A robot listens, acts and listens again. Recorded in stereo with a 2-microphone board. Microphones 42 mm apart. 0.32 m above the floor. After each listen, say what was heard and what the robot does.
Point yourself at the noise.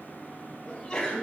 The sneeze: about 20° left or 160° left. Turn 20° left.
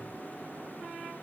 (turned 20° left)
Keep listening.
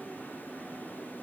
I heard a sneeze, but can't make it out now. It was about straight ahead or 140° left.